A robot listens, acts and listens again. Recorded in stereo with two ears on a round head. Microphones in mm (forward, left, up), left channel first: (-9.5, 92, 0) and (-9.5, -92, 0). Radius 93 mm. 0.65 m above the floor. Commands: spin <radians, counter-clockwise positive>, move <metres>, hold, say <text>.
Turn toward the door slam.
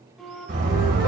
spin -0.87
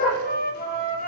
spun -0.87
hold
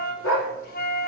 say I heard a door slam, but can't make it out now. It was about straight ahead or 80° right.